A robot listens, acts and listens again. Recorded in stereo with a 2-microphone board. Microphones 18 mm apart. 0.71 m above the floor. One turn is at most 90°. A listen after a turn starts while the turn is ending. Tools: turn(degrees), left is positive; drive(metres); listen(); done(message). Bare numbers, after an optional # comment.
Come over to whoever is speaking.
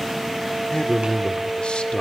# The man speaking: about 65° left or 115° left.
turn(65)
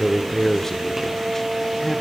# So it is at 10° left.
turn(10)
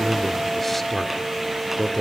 drive(1.0)
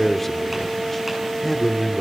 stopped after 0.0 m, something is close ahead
done("Blocked. The man speaking is further on, straight ahead.")